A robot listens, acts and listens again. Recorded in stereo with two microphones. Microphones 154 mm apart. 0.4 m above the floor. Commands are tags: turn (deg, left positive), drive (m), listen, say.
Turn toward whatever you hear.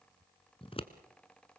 <turn deg="40"/>
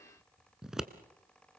<say>Facing the scissors, 1 to 2 m away.</say>